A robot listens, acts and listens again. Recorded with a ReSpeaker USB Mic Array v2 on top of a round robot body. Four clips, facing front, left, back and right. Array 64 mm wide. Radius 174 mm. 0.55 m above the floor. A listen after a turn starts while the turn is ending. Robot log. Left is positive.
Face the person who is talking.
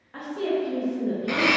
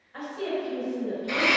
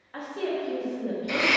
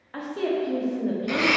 note: The woman speaking: 100° right.
cmd yaw -100
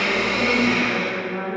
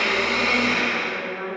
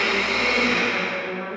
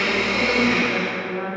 note: The woman speaking is now 15° left.
cmd yaw +15
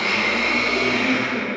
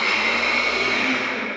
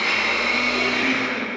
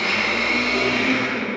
cmd idle
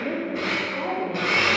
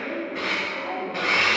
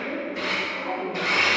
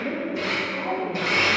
end: Found it: a woman speaking, straight ahead.